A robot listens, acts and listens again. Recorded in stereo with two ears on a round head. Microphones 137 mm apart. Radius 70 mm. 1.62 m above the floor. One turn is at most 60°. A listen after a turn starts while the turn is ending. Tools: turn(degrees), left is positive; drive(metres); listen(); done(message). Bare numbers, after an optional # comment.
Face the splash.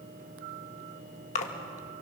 # The splash: about 50° left or 130° left.
turn(50)
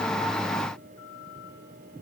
listen()
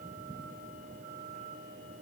done("I heard a splash, but can't make it out now. It was about straight ahead or 80° left.")